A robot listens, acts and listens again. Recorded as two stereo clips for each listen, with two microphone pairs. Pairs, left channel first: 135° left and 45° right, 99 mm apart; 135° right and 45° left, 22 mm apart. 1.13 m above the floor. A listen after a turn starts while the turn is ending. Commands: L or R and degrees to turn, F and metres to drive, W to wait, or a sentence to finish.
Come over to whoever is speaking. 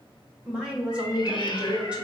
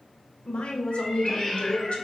R125
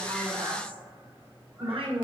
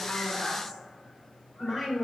R30
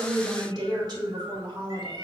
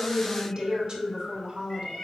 F1.0
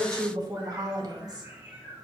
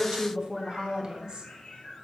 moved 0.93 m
F1.0
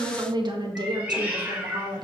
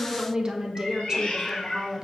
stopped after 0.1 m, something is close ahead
R10
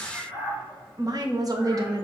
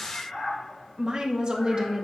Arrived at the woman speaking, straight ahead.